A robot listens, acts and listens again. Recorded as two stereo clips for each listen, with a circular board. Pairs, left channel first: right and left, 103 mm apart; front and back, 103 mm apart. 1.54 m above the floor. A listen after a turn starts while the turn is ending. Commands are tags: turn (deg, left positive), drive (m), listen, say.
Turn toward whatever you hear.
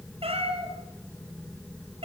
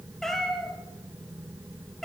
<turn deg="85"/>
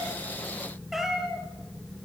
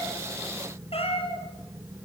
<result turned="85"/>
<say>Found it: a cat meowing, straight ahead.</say>